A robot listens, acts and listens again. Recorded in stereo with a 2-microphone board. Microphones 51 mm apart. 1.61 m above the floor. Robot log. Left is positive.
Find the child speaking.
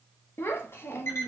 note: The child speaking: about 50° left or 130° left.
cmd yaw +50
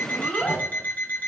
note: So it is at 15° left.
cmd yaw +15
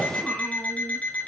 cmd idle
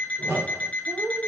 end: Facing the child speaking, under 1 m away.